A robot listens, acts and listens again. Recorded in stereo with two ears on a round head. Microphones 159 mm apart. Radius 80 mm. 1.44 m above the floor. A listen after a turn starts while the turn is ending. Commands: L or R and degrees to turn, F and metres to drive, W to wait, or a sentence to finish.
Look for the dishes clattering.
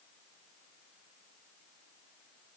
W
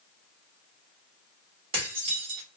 R30
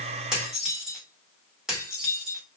Facing the dishes clattering.